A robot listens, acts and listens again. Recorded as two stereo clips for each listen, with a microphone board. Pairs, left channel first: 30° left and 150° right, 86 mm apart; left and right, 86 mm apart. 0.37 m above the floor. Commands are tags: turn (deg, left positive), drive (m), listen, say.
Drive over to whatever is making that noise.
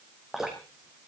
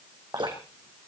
<turn deg="-65"/>
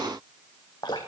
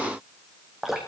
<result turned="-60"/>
<drive m="1.0"/>
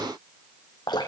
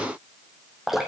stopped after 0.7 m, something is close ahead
<say>Blocked. The dripping is further on, straight ahead.</say>